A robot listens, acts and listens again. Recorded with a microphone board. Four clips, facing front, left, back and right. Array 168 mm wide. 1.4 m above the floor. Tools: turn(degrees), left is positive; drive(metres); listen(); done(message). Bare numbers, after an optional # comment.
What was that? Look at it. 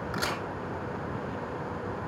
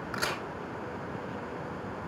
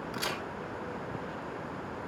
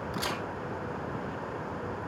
# The crack: 45° left.
turn(45)
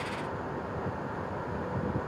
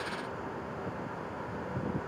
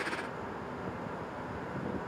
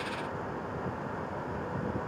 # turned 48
done("Facing where the crack came from. I can't hear it now.")